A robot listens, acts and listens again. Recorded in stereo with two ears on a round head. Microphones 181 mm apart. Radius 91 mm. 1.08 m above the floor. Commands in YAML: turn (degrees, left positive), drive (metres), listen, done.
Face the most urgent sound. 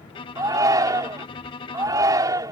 turn: -20
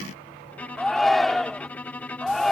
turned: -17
done: "Facing the shout."